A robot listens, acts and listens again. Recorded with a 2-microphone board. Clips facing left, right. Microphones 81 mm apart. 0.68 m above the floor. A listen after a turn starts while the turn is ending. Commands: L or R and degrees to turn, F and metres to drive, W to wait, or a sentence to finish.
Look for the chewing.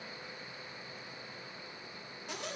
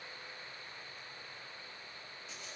W
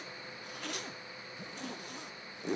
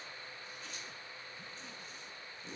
W
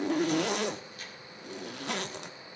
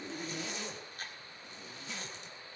R40
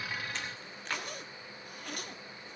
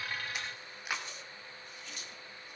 R10
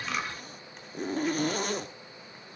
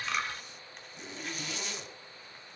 Facing the chewing.